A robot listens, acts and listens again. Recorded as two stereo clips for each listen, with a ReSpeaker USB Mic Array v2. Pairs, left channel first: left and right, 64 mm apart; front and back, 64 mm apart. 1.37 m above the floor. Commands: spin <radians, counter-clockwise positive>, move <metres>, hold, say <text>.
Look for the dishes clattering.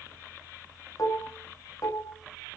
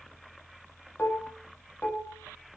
spin 1.05
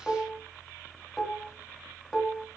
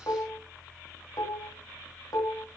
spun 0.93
spin 0.17
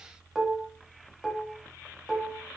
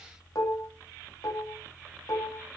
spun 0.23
say Facing the dishes clattering, 2 to 4 m away.